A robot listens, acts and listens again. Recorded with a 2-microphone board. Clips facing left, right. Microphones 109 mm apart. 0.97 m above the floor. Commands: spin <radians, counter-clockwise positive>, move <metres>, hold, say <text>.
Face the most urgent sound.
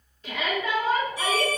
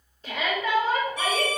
spin -0.61
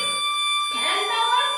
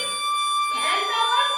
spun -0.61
say Facing the shout, 2 to 4 m away.